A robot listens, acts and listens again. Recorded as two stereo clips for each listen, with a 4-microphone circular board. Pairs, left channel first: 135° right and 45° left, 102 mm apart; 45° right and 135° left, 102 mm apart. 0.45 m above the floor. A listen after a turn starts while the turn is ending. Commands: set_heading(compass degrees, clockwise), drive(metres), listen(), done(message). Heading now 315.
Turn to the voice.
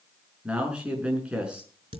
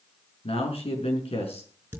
set_heading(350)
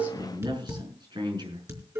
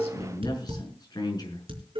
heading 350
done("Found it: a man speaking, straight ahead, over 4 m away.")